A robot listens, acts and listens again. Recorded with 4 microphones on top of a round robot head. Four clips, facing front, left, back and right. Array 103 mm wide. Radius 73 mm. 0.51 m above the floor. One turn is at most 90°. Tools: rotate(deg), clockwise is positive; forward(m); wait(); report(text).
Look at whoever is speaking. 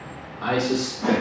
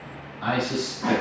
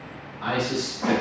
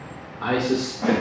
rotate(70)
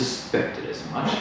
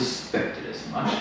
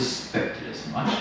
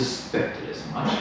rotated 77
rotate(-10)
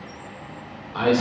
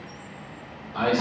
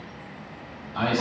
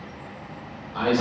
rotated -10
report("Found it: a man speaking, straight ahead.")